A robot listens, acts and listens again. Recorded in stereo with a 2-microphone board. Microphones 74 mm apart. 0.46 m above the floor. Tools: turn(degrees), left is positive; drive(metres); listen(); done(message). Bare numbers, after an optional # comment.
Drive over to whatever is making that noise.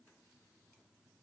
listen()
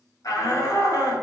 # The shout: about 60° left or 120° left.
turn(60)
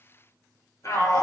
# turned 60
# So it is at 55° left.
turn(55)
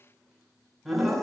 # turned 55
drive(1.0)
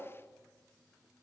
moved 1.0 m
listen()
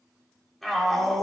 drive(1.0)
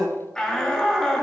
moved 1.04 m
# The shout is now 15° left.
turn(15)
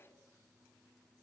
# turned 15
listen()
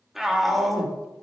drive(1.0)
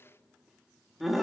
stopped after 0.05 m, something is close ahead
done("Arrived at the shout, straight ahead.")